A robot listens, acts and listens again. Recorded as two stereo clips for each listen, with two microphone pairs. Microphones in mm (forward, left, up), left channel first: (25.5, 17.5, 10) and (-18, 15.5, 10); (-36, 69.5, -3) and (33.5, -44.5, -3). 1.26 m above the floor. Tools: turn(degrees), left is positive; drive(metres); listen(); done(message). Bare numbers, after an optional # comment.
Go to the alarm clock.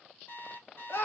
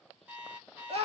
# The alarm clock: 20° left.
turn(20)
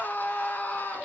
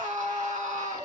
listen()
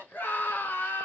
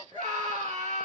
listen()
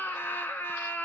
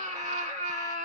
done("Facing where the alarm clock came from. I can't hear it now. I did not reach it.")